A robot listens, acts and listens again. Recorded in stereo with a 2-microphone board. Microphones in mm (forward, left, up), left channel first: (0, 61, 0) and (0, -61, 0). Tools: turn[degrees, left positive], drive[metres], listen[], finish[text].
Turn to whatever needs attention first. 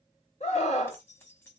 Thought: The scream: about 65° left or 115° left.
Action: turn[65]
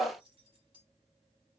Thought: So it is at 10° left.
Action: turn[10]
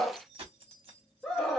Action: finish[Facing the scream, 1 to 2 m away.]